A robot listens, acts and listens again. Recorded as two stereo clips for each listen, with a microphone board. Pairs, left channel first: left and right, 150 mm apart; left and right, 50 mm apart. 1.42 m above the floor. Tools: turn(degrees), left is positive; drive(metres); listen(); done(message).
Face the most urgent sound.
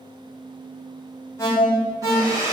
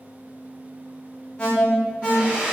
turn(degrees=20)
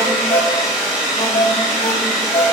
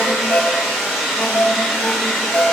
turn(degrees=140)
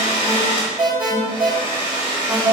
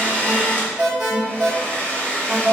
turn(degrees=-10)
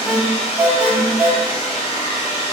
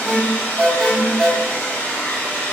done("Facing the alarm.")